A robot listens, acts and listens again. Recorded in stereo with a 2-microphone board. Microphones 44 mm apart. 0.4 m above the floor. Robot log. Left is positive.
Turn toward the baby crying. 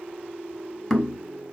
cmd idle
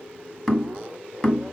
cmd idle
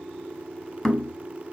end: I can't make out a baby crying to turn to.